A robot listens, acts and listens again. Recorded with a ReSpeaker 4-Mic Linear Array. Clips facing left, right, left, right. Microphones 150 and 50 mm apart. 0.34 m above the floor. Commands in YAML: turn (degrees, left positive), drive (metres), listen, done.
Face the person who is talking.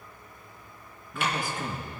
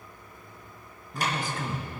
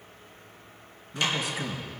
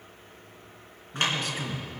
turn: 30
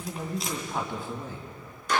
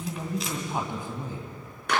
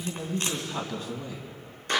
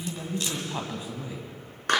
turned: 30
turn: -20
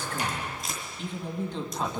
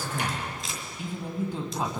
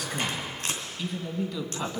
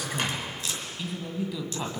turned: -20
turn: -10
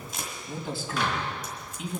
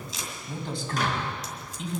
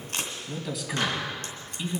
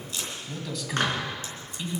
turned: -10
done: "Found it: a man speaking, straight ahead."